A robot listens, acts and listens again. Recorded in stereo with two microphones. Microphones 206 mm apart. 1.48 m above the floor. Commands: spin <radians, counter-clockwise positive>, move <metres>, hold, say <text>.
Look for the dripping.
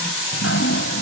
spin 1.57
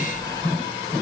spin 0.26
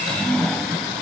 say Found it: dripping, straight ahead.